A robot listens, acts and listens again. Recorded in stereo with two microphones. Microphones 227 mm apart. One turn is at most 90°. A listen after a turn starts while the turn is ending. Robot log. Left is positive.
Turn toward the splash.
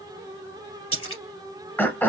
cmd yaw +90
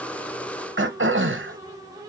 end: Facing where the splash came from. I can't hear it now.